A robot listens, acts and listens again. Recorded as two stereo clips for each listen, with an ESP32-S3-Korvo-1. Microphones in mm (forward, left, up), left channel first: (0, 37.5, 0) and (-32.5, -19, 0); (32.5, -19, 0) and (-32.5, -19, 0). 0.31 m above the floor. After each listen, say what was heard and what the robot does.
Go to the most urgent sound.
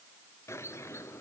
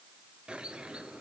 Keep listening.
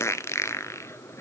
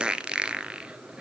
Keep listening.
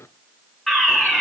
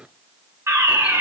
The fire alarm: 145° left. Turn 145° left.
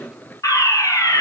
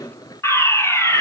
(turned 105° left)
The fire alarm is now 40° left. Turn 40° left.
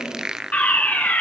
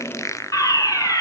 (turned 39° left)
Drive 1.0 m forward.
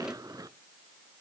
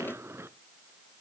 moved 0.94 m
Keep listening.
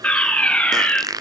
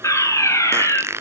Drive 1.0 m forward.
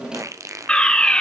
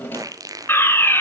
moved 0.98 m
Drive 1.0 m forward.
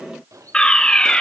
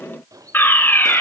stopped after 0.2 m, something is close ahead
Arrived at the fire alarm, straight ahead.